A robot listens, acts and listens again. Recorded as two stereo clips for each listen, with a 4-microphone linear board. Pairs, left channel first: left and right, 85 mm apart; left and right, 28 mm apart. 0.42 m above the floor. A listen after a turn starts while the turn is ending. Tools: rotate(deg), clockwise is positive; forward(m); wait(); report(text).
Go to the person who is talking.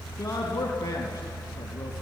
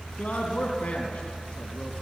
rotate(-30)
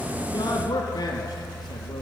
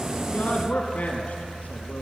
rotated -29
rotate(-120)
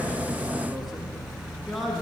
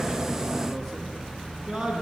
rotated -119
forward(1.0)
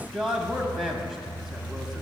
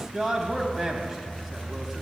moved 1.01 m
forward(1.0)
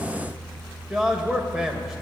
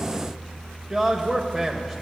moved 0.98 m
forward(1.0)
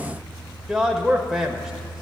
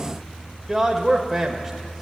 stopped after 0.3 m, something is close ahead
report("I am next to the man speaking.")